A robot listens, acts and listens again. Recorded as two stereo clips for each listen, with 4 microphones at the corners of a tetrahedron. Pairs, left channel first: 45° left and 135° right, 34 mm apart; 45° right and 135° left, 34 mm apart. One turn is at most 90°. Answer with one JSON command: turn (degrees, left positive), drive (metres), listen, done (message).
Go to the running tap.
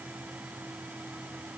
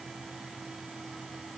{"listen": true}
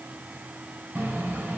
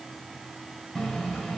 {"turn": -90}
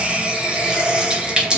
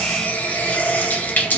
{"turn": -70}
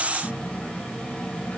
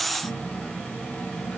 {"turn": -15}
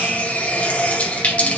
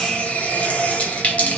{"drive": 1.0}
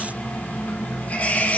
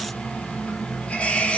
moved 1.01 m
{"drive": 1.0}
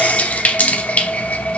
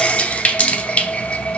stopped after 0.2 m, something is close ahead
{"done": "Arrived at the running tap, straight ahead."}